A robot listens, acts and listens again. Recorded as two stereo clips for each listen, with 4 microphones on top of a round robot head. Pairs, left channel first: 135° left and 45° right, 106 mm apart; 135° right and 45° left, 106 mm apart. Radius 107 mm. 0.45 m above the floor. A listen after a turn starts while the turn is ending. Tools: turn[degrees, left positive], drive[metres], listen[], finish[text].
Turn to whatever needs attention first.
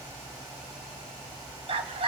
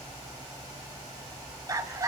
Thought: The scream: 15° right.
Action: turn[-15]
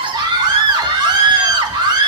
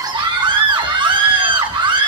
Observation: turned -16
Action: finish[Found it: a scream, straight ahead, 2 to 4 m away.]